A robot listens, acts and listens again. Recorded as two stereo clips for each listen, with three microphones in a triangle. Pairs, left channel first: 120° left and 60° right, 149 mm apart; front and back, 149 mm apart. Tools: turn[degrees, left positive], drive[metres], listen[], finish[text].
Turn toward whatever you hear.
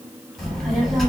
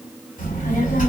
Thought: The child speaking: 30° left.
Action: turn[30]
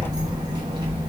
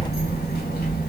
Action: finish[Facing the child speaking, 1 to 2 m away.]